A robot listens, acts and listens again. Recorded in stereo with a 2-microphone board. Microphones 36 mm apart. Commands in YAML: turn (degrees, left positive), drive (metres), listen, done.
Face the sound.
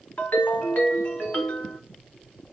turn: 65
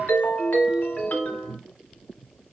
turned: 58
turn: 55
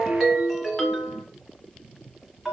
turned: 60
done: "Facing the ringtone, 1 to 2 m away."